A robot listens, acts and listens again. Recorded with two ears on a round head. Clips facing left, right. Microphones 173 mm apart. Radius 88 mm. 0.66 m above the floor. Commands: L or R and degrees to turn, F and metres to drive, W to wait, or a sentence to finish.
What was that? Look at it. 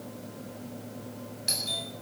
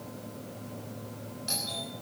L20
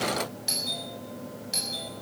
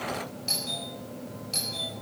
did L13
L10
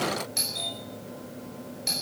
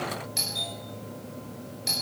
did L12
Facing the doorbell, over 4 m away.